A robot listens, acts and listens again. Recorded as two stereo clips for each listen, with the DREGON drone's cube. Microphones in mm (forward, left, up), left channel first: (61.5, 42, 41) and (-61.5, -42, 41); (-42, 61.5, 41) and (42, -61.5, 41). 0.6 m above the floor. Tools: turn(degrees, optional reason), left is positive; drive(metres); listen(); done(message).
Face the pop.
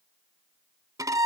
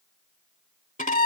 listen()
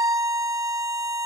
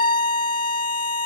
listen()
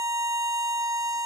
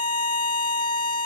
done("I can't make out a pop, only a violin.")